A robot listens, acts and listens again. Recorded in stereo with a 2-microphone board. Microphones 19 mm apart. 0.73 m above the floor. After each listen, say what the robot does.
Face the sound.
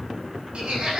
Turn 70° right.
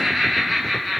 Facing the laughter.